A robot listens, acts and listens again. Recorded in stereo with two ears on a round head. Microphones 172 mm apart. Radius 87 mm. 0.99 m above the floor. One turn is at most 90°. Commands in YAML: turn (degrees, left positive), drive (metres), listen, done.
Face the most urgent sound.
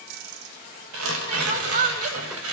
turn: -40
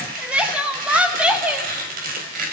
turn: -10
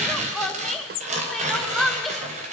done: "Facing the crying."